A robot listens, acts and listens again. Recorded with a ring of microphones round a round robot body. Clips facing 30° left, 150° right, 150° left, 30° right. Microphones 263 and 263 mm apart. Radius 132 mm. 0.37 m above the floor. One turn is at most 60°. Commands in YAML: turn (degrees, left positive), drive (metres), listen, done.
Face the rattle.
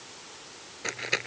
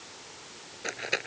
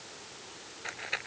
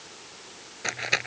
turn: -50
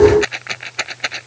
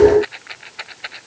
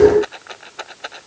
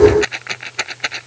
turn: 15
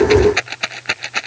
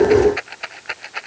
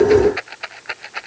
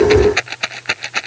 done: "Facing the rattle."